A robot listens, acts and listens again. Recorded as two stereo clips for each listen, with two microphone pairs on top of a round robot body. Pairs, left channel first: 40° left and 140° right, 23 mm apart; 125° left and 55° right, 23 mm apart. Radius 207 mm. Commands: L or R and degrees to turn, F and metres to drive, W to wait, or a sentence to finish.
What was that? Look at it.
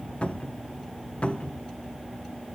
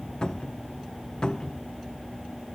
L75
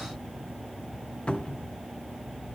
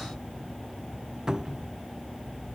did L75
Facing the cupboard door.